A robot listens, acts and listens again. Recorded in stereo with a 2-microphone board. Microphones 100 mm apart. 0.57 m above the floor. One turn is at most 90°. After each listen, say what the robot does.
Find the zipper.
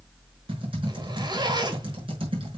Turn 45° right.
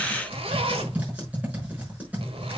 Turn 85° right.
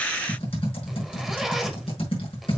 Found it: a zipper, straight ahead, 1 to 2 m away.